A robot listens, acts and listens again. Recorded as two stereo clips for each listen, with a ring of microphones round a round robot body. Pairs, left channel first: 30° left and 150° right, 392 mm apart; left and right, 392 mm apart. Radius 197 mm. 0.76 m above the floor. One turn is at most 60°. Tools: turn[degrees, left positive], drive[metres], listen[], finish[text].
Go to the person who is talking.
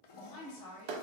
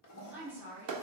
Action: drive[1.0]
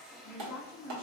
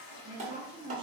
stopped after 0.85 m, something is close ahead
Thought: The woman speaking is now 15° right.
Action: turn[-15]
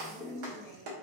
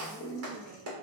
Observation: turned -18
Action: finish[I am next to the woman speaking.]